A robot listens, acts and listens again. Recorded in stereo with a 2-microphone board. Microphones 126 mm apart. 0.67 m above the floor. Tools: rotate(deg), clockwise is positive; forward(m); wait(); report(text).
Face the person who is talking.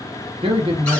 rotate(45)
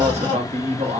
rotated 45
rotate(80)
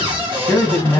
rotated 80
rotate(-15)
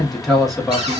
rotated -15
report("Facing the man speaking.")